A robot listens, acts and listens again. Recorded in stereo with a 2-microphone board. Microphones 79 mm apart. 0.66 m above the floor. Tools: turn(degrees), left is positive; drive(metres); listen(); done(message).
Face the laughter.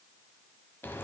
listen()
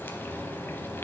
listen()
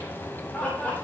turn(degrees=20)
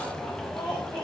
turn(degrees=20)
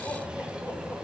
listen()
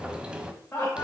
turn(degrees=25)
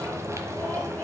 listen()
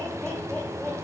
listen()
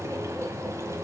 done("I heard laughter, but can't make it out now. It was about straight ahead or 130° left.")